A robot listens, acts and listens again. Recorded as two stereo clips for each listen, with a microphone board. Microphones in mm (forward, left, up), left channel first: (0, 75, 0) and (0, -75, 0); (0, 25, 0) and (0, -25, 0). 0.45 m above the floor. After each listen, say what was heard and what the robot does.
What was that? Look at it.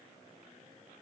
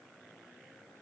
Keep listening.
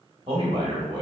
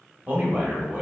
The man speaking: about 30° right or 150° right. Turn 30° right.
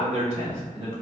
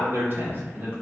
So it is at 135° right. Turn 135° right.
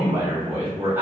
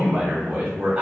The man speaking is now 15° right. Turn 15° right.
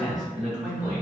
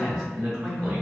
The man speaking is now 10° right. Turn 10° right.
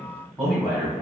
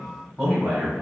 The man speaking is now 10° right. Turn 10° right.
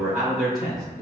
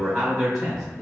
Facing the man speaking, 2 to 4 m away.